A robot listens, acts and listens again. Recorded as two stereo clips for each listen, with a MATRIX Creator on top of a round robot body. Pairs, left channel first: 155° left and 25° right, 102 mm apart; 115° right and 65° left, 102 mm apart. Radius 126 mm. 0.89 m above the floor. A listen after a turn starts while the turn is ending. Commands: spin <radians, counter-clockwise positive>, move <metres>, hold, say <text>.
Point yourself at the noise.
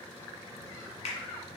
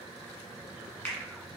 spin 2.88
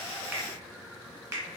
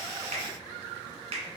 spin 0.70
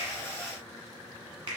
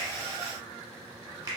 say Found it: a finger snap, straight ahead.